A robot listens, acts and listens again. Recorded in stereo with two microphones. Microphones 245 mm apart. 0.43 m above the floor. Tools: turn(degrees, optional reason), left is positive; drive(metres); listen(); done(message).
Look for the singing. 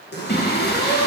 turn(degrees=40, reason="The singing: about 40° left or 140° left.")
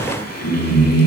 turn(degrees=100, reason="So it is at 100° left.")
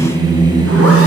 turn(degrees=-20, reason="The singing is now 20° right.")
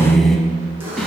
done("Facing the singing, under 1 m away.")